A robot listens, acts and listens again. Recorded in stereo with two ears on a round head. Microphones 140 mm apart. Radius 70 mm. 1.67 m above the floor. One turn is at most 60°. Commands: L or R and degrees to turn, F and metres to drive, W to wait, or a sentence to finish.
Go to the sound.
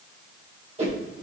R45
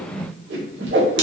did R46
R60
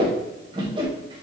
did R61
R30
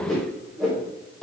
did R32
F1.0
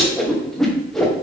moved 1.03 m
F1.0
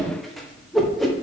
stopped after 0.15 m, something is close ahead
Arrived at the whoosh, straight ahead.